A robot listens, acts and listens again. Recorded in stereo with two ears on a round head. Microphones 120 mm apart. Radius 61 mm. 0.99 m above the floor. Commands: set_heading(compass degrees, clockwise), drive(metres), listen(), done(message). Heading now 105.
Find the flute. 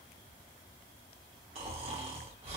listen()
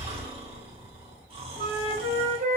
set_heading(165)
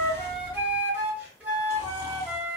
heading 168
set_heading(183)
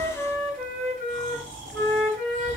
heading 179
done("Found it: a flute, straight ahead.")